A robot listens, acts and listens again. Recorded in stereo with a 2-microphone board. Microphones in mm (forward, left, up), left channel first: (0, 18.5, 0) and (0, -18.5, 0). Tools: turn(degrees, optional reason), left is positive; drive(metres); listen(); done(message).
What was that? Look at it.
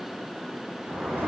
turn(degrees=-90)
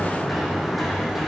done("Facing the sliding door.")